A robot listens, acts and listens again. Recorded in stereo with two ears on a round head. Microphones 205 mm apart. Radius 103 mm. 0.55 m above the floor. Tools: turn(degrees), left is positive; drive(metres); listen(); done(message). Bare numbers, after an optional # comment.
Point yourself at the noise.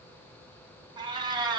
# The cat meowing: about 20° right or 160° right.
turn(-20)
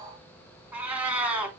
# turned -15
done("Found it: a cat meowing, straight ahead, 2 to 4 m away.")